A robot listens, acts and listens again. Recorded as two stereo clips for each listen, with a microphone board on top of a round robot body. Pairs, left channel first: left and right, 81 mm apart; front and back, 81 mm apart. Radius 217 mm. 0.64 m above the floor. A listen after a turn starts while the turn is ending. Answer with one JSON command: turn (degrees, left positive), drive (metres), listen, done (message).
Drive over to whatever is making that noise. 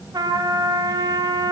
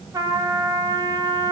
{"turn": -135}
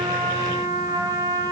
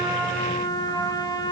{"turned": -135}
{"turn": -45}
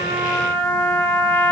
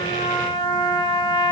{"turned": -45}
{"turn": 20}
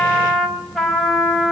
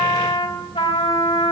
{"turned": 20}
{"drive": 1.0}
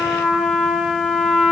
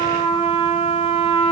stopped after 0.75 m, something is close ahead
{"done": "Blocked. The trumpet is further on, straight ahead."}